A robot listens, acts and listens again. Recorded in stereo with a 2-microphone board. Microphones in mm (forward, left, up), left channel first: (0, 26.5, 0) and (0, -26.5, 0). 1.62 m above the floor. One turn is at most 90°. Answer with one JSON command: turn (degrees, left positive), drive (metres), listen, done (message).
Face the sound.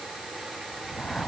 {"turn": 15}
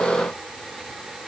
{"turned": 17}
{"listen": true}
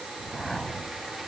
{"done": "Facing the whoosh."}